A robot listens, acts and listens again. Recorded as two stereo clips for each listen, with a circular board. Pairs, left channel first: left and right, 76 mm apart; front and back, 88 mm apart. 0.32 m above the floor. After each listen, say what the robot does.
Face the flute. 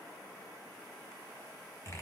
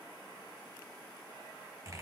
Keep listening.
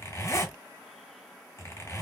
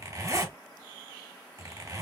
Keep listening.
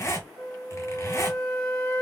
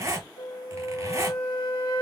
Turn 10° left.
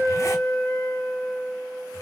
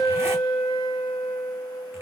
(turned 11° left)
Found it: a flute, straight ahead, 1 to 2 m away.